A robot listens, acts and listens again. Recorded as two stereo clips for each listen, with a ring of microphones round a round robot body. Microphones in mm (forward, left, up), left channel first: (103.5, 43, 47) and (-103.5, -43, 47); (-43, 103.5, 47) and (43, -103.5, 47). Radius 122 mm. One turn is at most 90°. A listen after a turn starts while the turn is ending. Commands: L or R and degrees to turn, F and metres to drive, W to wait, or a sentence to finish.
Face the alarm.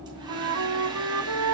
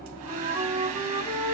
W
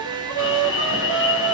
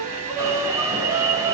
Found it: an alarm, straight ahead.